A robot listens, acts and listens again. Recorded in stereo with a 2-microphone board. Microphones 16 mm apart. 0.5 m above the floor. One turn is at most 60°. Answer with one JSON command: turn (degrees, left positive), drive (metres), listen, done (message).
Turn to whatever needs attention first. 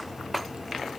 {"listen": true}
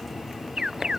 {"turn": -50}
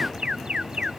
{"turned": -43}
{"turn": -60}
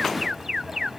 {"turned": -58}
{"turn": -30}
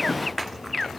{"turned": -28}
{"done": "Found it: an alarm, straight ahead."}